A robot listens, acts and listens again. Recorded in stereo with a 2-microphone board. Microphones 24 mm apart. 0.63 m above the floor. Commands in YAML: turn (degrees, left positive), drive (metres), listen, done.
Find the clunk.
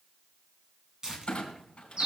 turn: 40
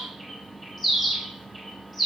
listen: true
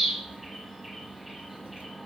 done: "I heard a clunk, but can't make it out now. It was about straight ahead or 100° left."